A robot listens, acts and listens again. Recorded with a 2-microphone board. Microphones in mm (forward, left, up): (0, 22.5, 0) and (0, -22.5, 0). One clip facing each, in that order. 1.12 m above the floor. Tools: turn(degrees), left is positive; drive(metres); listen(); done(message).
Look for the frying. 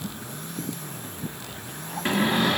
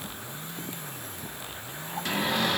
listen()
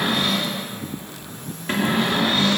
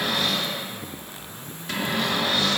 listen()
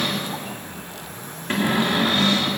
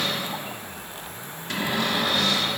done("I can't make out frying to turn to.")